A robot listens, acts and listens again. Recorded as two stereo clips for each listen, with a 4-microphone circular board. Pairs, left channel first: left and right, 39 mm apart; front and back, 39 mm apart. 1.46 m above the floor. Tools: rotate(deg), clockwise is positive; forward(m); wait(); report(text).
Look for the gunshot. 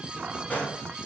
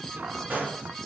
rotate(-135)
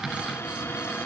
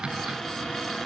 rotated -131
report("Facing where the gunshot came from. I can't hear it now.")